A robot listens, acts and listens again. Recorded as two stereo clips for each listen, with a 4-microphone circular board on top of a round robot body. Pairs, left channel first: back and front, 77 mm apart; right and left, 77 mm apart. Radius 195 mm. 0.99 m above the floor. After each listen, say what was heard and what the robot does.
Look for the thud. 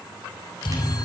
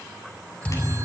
The thud: 165° right. Turn 165° right.
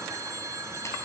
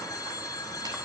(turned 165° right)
Facing where the thud came from. I can't hear it now.